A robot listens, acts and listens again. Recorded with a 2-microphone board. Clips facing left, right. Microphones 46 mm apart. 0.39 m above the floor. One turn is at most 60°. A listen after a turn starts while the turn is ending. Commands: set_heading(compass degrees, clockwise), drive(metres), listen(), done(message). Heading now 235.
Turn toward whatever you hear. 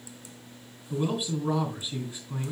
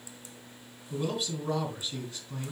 set_heading(215)
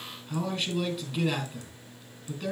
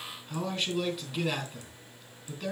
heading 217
done("Found it: a man speaking, straight ahead, 2 to 4 m away.")